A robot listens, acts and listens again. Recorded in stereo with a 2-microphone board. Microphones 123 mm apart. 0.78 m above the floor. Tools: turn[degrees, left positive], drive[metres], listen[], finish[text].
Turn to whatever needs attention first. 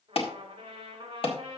Thought: The alarm: about 50° left or 130° left.
Action: turn[50]
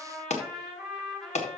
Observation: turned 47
Thought: So it is at 80° left.
Action: turn[80]
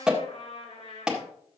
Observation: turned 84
Action: finish[Facing the alarm.]